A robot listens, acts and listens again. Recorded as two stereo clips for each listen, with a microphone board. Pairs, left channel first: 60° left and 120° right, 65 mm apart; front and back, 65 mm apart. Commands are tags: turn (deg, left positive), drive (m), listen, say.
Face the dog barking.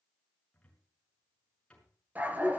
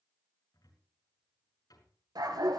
<turn deg="175"/>
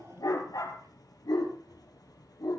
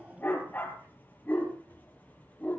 <turn deg="65"/>
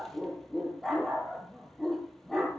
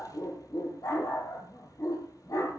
<turn deg="-25"/>
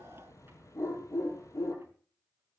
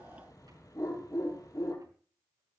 <turn deg="25"/>
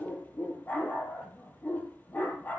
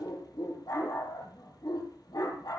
<say>Found it: a dog barking, straight ahead, over 4 m away.</say>